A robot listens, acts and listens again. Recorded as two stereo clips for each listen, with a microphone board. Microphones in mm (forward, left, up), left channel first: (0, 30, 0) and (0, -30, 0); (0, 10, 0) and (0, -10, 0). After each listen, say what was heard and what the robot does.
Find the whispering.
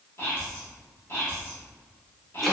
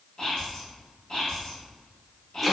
The whispering: about 45° left or 135° left. Turn 45° left.
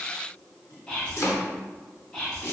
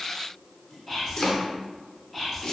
So it is at 15° left. Turn 15° left.
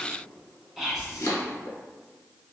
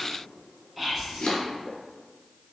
Facing the whispering, 1 to 2 m away.